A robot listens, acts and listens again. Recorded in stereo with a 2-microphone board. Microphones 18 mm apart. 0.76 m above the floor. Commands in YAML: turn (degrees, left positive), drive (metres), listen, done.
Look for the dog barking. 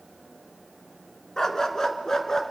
turn: 35
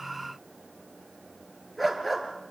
done: "Facing the dog barking, over 4 m away."